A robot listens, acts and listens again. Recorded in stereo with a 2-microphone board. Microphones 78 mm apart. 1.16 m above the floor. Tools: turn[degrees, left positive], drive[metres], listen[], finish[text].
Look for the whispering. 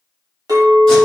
Action: listen[]
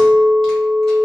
Action: listen[]
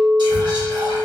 Action: turn[-90]
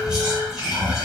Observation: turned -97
Action: finish[Facing the whispering, under 1 m away.]